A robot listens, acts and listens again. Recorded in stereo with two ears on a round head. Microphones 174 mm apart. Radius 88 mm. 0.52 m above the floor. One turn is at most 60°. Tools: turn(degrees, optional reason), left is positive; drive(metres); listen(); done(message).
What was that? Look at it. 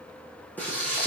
turn(degrees=30)
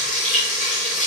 turn(degrees=60, reason="So it is at 140° left.")
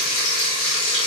turn(degrees=60, reason="The frying is now 100° left.")
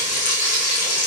turn(degrees=40, reason="The frying is now 40° left.")
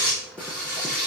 done("Facing the frying.")